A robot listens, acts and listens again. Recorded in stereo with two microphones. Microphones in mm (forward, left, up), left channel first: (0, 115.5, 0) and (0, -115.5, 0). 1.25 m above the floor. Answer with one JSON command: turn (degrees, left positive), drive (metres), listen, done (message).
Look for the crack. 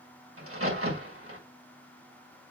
{"turn": -75}
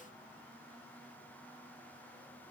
{"listen": true}
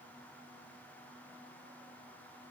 {"done": "I heard a crack, but can't make it out now. It was about straight ahead or 30° right."}